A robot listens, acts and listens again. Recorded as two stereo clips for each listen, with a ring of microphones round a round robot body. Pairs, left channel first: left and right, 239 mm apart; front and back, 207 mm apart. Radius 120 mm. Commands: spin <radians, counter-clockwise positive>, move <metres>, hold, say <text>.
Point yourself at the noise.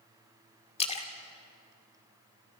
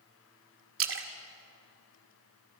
spin 2.71
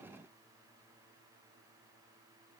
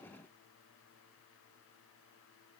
say I heard a splash from this way, but can't make it out now.